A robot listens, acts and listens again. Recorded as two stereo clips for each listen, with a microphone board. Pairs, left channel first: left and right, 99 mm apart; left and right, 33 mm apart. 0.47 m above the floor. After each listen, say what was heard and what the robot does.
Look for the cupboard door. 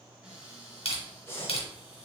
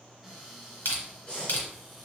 Turn 30° right.
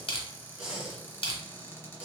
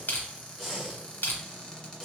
So it is at 25° left. Turn 25° left.
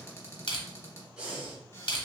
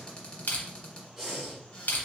The cupboard door is now 30° left. Turn 30° left.
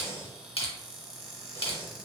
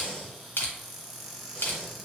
Found it: a cupboard door, straight ahead.